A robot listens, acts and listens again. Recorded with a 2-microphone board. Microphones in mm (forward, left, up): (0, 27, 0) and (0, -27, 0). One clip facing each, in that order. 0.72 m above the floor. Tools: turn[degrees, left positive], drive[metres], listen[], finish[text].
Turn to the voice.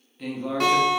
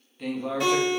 Action: turn[30]
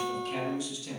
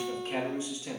Thought: So it is at 35° right.
Action: turn[-35]
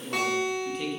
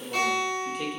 Thought: The man speaking is now 10° right.
Action: turn[-10]
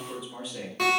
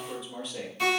Action: finish[Facing the man speaking, 1 to 2 m away.]